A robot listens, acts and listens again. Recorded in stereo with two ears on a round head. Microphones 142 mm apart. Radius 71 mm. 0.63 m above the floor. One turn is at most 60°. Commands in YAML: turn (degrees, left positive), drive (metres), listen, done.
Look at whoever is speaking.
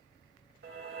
listen: true
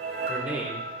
turn: -30
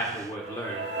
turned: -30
turn: 25
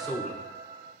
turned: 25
done: "Facing the man speaking."